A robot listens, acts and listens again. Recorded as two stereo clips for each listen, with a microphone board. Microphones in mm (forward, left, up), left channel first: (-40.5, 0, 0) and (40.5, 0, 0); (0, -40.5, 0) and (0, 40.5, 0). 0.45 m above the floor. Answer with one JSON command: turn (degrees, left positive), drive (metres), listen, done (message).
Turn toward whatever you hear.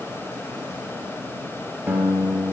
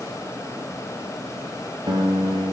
{"turn": 75}
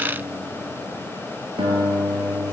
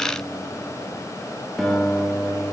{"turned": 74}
{"done": "Facing the guitar."}